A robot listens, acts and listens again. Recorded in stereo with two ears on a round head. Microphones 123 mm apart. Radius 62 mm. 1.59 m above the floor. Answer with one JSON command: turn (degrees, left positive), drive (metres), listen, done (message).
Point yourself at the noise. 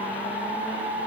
{"listen": true}
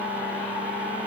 {"listen": true}
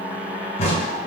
{"turn": 45}
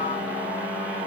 {"listen": true}
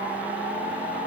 {"done": "I heard a crack, but can't make it out now. It was about straight ahead or 90° left."}